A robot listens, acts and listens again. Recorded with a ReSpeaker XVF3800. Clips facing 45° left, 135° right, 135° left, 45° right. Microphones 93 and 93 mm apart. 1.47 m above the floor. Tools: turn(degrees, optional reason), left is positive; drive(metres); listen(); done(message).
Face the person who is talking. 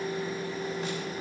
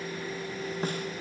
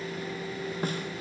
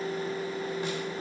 listen()
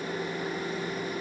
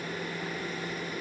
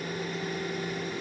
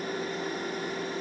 listen()
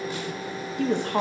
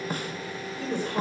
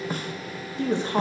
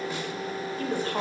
turn(degrees=70, reason="The woman speaking: 70° left.")
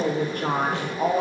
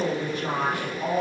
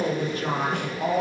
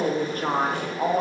turn(degrees=10, reason="The woman speaking is now 10° left.")
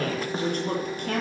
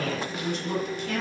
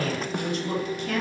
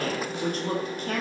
done("Facing the woman speaking, 2 to 4 m away.")